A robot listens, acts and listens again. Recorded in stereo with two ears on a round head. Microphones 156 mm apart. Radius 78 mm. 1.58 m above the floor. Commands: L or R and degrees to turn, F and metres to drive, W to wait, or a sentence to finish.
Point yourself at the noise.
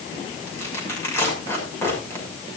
L30
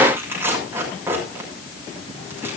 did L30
R15
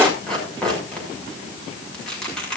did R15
Facing the tearing paper.